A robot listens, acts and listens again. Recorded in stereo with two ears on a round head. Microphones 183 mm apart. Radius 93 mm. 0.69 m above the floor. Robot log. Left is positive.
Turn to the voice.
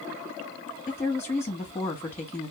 cmd yaw +30
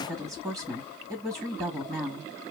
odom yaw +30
note: So it is at 20° right.
cmd yaw -20
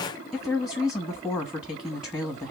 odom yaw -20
end: Facing the woman speaking.